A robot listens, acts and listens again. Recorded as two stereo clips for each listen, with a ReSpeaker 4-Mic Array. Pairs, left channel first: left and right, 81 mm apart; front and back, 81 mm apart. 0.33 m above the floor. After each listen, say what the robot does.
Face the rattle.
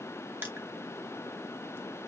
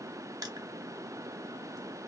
Keep listening.
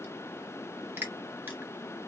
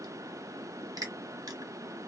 Keep listening.
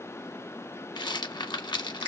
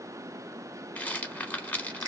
Turn 70° left.
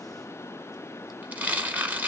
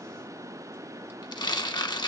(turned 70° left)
Turn 20° right.
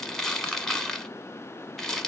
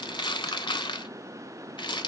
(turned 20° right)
Found it: a rattle, straight ahead.